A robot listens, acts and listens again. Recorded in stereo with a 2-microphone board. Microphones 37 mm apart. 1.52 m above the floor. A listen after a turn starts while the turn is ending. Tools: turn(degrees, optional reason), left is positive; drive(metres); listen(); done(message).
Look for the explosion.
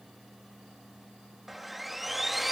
listen()
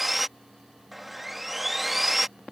listen()
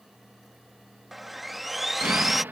turn(degrees=-90)
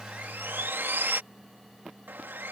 done("I heard an explosion from this way, but can't make it out now.")